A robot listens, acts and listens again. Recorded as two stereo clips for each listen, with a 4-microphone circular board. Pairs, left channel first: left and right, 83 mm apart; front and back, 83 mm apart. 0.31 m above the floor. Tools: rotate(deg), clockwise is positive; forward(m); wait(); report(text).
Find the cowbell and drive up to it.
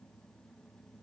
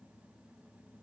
wait()
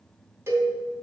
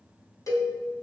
rotate(40)
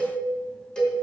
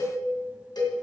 rotate(-10)
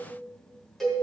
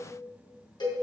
forward(1.0)
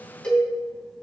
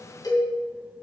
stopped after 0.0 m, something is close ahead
rotate(-10)
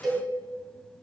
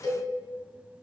report("Blocked. The cowbell is further on, straight ahead.")